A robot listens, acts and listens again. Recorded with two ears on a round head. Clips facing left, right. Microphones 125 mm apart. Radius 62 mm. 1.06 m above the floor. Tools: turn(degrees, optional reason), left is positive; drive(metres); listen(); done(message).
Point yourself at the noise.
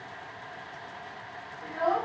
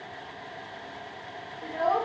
turn(degrees=-25, reason="The child speaking: about 25° right or 155° right.")
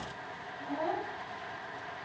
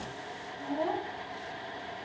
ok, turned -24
turn(degrees=-30, reason="The child speaking: about 30° right or 150° right.")
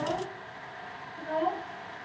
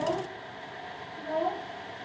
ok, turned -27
turn(degrees=-30)
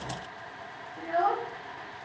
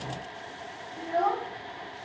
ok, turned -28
turn(degrees=-25, reason="The child speaking: about 25° right or 155° right.")
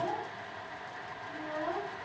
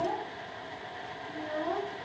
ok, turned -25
turn(degrees=-130, reason="So it is at 130° right.")
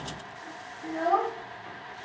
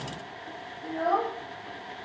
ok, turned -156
turn(degrees=25, reason="The child speaking is now 25° left.")
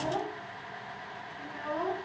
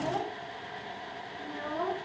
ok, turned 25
done("Found it: a child speaking, straight ahead.")